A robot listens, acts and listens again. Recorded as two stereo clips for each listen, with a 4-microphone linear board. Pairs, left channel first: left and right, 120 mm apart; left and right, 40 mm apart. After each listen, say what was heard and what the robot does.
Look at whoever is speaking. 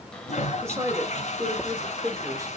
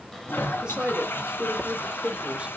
The woman speaking: about 25° right or 155° right. Turn 25° right.
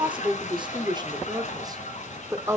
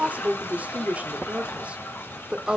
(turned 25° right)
The woman speaking: about 20° right or 160° right. Turn 20° right.
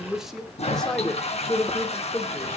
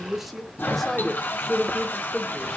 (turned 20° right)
So it is at 20° left. Turn 20° left.
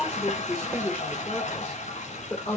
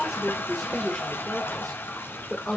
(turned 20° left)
The woman speaking is now 10° left. Turn 10° left.
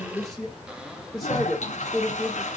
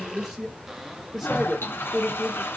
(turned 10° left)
Found it: a woman speaking, straight ahead, 1 to 2 m away.